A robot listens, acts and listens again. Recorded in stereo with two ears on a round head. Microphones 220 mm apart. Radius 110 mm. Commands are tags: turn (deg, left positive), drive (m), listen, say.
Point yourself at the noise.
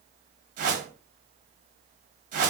<turn deg="-35"/>
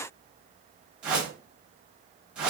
<say>Found it: a whoosh, straight ahead, 1 to 2 m away.</say>